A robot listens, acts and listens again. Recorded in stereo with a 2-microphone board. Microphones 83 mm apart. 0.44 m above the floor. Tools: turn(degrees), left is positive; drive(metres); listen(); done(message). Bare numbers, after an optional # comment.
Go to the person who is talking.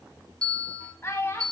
# The child speaking: about 30° left or 150° left.
turn(30)
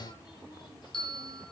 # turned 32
listen()
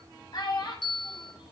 # So it is at 120° left.
turn(120)
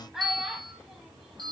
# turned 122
drive(1.0)
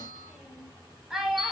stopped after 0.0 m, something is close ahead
done("Blocked. The child speaking is further on, straight ahead.")